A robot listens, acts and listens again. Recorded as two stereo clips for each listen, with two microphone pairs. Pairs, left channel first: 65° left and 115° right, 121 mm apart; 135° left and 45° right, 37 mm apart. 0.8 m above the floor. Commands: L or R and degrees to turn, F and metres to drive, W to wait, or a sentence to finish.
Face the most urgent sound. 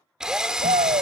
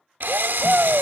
R100
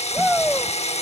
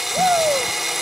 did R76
R25
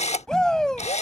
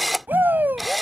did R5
R20
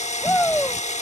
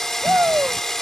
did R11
R10
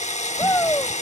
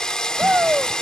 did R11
Found it: a shout, straight ahead.